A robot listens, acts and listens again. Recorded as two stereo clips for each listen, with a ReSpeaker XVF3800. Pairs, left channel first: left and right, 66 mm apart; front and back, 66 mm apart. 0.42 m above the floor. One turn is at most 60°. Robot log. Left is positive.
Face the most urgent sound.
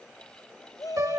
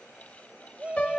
note: The shout: 110° left.
cmd yaw +60
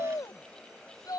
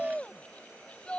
note: The shout is now 75° left.
cmd yaw +60
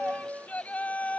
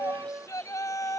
note: The shout is now 20° left.
cmd yaw +20
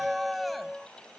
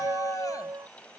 end: Facing the shout.